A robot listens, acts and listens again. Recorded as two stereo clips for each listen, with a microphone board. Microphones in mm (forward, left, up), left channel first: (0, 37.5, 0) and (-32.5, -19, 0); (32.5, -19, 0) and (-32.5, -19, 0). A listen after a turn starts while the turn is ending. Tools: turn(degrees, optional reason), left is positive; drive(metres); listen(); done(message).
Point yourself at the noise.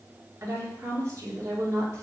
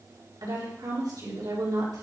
turn(degrees=-165, reason="The woman speaking: 165° right.")
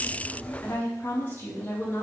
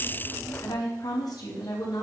done("Found it: a woman speaking, straight ahead.")